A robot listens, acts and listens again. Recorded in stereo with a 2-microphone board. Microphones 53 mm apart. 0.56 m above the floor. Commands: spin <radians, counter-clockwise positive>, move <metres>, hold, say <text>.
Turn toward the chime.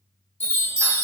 spin 0.96
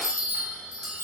spin 1.22
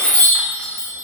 spin 0.17
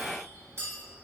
hold
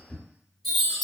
say Found it: a chime, straight ahead, 1 to 2 m away.